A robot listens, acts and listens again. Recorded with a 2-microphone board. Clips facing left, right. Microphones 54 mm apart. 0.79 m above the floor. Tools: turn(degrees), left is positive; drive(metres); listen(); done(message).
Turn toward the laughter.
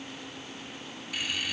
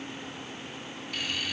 turn(degrees=30)
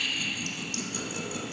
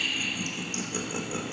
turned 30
turn(degrees=-30)
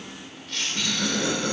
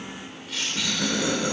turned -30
done("Facing the laughter.")